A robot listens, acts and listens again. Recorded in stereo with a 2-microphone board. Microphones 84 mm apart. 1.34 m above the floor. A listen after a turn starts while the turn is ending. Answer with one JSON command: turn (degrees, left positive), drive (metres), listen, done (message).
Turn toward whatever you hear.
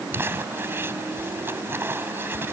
{"turn": -30}
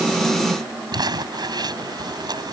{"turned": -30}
{"turn": -120}
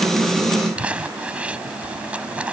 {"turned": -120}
{"turn": -15}
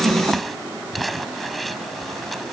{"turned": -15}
{"done": "Found it: crumpling, straight ahead."}